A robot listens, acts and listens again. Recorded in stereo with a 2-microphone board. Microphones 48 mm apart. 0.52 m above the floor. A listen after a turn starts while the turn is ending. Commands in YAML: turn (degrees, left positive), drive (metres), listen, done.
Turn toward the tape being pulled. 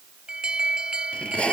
turn: 25
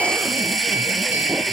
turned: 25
done: "Found it: tape being pulled, straight ahead."